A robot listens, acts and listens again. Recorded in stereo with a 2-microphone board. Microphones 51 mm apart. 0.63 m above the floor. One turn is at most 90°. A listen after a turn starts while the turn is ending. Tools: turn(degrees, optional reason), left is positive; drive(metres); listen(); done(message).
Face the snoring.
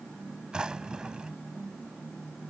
listen()
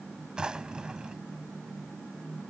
listen()
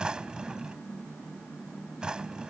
done("I can't make out snoring, only a drawer.")